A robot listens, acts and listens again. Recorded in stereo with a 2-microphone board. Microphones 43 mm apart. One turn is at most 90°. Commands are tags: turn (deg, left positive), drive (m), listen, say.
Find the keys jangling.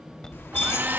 <turn deg="65"/>
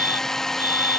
<listen/>
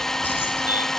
<listen/>
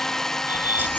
<say>I heard keys jangling, but can't make it out now. It was about straight ahead or 50° left.</say>